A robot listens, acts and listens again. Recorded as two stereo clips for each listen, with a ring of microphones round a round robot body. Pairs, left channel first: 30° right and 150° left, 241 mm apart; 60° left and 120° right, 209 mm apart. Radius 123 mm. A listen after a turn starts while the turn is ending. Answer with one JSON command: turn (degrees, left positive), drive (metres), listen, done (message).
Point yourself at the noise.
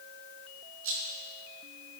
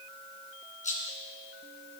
{"turn": 115}
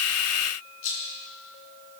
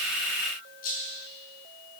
{"done": "Facing the rattle, 2 to 4 m away."}